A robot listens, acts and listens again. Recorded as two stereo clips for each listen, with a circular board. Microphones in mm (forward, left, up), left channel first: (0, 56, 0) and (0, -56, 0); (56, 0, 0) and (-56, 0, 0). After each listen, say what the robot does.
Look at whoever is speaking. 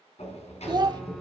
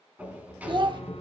Turn 140° right.
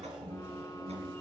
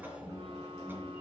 Keep listening.
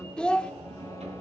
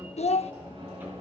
Turn 10° left.
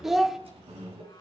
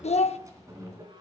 Facing the child speaking, under 1 m away.